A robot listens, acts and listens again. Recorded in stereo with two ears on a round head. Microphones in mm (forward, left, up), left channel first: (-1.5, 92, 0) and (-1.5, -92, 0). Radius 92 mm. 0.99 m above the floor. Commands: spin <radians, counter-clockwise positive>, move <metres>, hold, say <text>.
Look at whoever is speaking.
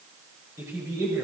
spin -0.52
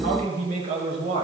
spin -2.53
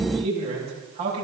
spin -0.52
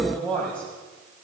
say Facing the man speaking, over 4 m away.